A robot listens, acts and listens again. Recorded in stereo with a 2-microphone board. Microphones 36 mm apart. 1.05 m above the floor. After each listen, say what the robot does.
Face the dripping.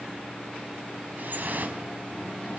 Turn 60° right.
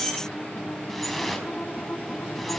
Facing the dripping.